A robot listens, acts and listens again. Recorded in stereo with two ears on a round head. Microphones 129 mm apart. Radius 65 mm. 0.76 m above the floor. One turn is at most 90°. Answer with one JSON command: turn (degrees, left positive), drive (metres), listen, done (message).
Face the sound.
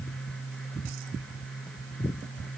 {"listen": true}
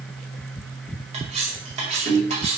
{"turn": -45}
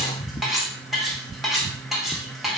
{"done": "Facing the cutlery clinking, 2 to 4 m away."}